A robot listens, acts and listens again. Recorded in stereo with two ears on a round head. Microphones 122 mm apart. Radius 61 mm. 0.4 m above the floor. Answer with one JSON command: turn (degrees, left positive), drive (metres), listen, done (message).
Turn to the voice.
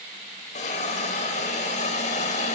{"listen": true}
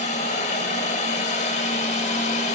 {"listen": true}
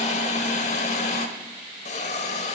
{"done": "I can't make out anyone speaking to turn to."}